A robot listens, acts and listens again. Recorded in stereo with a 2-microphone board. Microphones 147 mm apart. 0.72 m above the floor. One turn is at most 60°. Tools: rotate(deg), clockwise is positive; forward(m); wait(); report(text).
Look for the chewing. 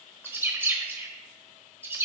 wait()
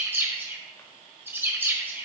wait()
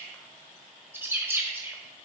report("I can't make out chewing to turn to.")